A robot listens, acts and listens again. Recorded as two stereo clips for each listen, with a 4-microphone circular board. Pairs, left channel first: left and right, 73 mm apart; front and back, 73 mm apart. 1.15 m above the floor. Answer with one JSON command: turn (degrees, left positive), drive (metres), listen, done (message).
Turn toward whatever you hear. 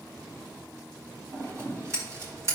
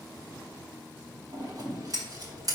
{"turn": -140}
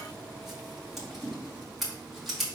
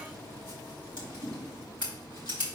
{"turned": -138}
{"done": "Found it: scissors, straight ahead, 2 to 4 m away."}